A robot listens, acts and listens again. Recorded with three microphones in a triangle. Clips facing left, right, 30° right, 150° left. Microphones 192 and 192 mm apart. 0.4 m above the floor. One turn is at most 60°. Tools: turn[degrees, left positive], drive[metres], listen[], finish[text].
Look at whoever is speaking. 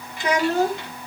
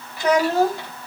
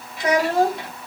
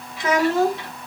Thought: The child speaking: 45° right.
Action: turn[-45]
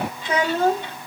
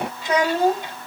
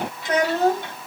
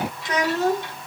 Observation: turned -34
Thought: The child speaking is now 15° right.
Action: turn[-15]
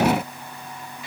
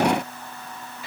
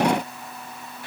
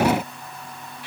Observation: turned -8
Action: listen[]
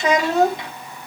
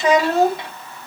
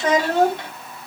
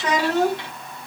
Action: finish[Facing the child speaking, 2 to 4 m away.]